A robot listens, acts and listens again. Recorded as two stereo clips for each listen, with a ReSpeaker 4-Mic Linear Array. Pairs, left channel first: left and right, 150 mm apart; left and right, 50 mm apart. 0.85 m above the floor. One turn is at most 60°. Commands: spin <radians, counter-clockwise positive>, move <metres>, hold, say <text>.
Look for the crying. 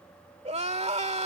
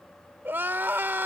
spin -0.79
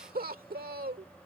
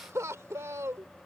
spin -1.05
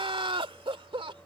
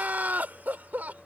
spin -0.61
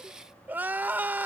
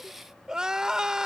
spin -0.26
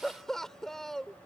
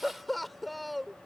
say Found it: crying, straight ahead.